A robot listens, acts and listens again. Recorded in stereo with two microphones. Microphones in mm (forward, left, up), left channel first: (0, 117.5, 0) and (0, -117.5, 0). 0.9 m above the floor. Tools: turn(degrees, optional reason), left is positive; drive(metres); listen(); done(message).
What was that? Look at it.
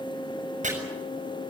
turn(degrees=-30, reason="The chopping: about 30° right or 150° right.")
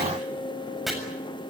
done("Found it: chopping, straight ahead.")